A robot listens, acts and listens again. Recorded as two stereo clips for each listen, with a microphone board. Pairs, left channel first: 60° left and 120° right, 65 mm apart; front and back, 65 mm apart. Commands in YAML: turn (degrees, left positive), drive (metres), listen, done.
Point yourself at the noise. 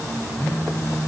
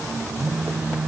turn: 110
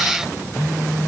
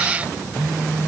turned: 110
turn: 20
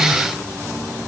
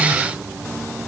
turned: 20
listen: true
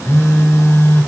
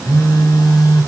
done: "Facing the phone buzzing."